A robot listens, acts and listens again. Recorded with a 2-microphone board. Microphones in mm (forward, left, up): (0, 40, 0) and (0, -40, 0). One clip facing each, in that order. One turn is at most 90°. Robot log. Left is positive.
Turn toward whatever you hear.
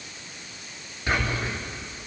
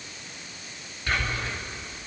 cmd yaw +30
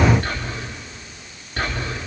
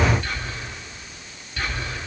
note: So it is at 130° left.
cmd yaw +90
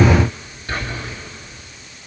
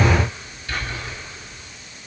note: The whispering is now 45° left.
cmd yaw +45
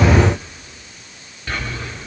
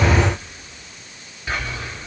note: The whispering is now 10° right.
cmd yaw -10
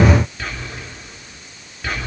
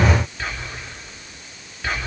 end: Found it: whispering, straight ahead, 2 to 4 m away.